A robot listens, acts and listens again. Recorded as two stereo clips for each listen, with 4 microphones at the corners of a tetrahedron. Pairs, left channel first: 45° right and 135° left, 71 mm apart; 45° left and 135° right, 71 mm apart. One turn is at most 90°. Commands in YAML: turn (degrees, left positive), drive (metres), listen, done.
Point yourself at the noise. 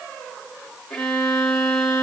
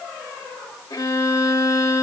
turn: 35
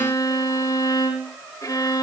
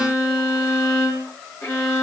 done: "Facing the violin, 2 to 4 m away."